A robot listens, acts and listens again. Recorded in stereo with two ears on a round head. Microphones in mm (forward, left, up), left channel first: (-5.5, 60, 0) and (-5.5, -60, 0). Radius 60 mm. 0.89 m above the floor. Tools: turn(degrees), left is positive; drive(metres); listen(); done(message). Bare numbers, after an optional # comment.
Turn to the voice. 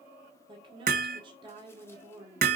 # The woman speaking: about 35° right or 145° right.
turn(-35)
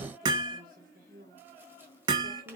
# So it is at 110° right.
turn(-110)
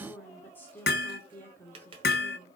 # The woman speaking is now 15° left.
turn(15)
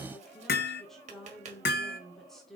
done("Facing the woman speaking, 1 to 2 m away.")